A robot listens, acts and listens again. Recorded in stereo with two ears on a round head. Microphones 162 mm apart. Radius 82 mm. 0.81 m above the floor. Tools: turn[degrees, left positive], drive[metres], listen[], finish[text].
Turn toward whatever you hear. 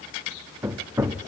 Action: turn[-30]
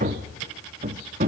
Thought: So it is at 135° right.
Action: turn[-135]
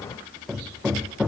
Action: finish[Facing the hammering, under 1 m away.]